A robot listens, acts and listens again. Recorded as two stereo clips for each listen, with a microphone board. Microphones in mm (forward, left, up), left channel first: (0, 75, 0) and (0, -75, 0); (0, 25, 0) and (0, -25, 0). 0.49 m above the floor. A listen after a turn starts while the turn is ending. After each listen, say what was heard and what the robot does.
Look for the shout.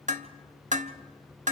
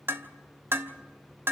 Keep listening.
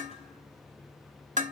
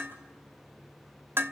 Keep listening.
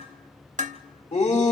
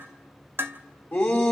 The shout: about 50° left or 130° left. Turn 50° left.
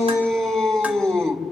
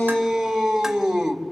Facing the shout, 2 to 4 m away.